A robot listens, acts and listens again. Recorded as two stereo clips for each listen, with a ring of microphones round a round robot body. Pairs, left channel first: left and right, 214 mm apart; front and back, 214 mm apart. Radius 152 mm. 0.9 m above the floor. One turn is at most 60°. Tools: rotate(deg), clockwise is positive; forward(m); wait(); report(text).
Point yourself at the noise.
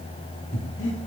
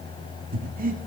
rotate(-60)
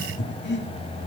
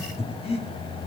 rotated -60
rotate(-60)
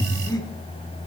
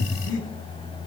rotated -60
rotate(-20)
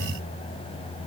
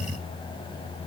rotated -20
wait()
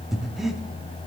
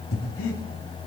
report("Facing the breathing.")